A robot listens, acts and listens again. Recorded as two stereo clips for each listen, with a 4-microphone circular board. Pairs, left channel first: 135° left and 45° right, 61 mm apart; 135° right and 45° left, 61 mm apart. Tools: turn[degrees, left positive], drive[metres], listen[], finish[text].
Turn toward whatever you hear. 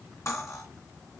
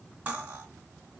Thought: The cutlery clinking: 110° left.
Action: turn[110]
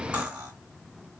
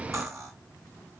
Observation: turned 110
Thought: The cutlery clinking is now 20° left.
Action: turn[20]
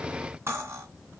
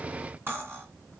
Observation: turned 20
Action: finish[Facing the cutlery clinking.]